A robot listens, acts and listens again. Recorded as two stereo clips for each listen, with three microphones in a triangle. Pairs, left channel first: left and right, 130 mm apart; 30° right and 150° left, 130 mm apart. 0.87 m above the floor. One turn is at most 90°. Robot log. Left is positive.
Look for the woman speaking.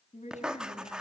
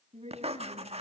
note: The woman speaking: 115° left.
cmd yaw +90
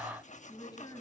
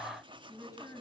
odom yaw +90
note: The woman speaking is now 30° left.
cmd yaw +30
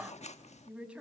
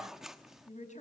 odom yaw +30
end: Facing the woman speaking, over 4 m away.